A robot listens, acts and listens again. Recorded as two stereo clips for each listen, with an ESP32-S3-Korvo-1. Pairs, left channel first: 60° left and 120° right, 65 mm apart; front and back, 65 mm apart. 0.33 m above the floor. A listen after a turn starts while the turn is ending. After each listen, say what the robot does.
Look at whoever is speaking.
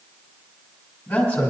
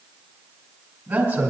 Turn 135° left.
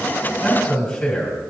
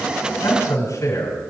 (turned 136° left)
Found it: a man speaking, straight ahead, 2 to 4 m away.